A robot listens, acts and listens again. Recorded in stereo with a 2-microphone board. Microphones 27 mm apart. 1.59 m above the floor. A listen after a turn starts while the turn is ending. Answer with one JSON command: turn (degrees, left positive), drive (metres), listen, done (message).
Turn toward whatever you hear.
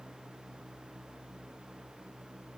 {"listen": true}
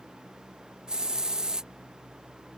{"turn": -30}
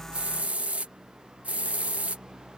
{"turn": -115}
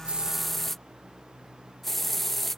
{"turn": 10}
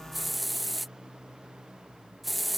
{"done": "Found it: a hiss, straight ahead."}